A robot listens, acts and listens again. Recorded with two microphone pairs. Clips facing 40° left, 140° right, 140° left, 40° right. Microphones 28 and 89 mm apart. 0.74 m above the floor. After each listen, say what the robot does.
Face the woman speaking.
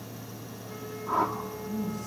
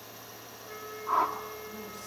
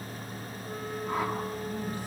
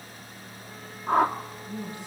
Turn 110° right.
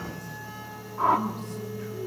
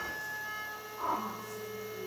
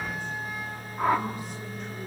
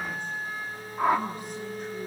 Keep listening.
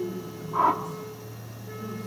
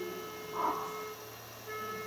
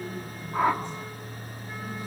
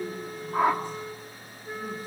Facing the woman speaking.